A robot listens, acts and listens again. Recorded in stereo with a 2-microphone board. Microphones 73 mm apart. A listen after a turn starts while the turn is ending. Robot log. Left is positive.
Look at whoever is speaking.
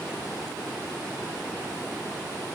cmd idle
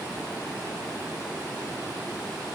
cmd idle
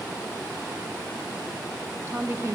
note: The woman speaking: about 40° right or 140° right.
cmd yaw -40
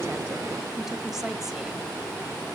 cmd idle
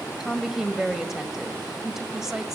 end: Found it: a woman speaking, straight ahead, 1 to 2 m away.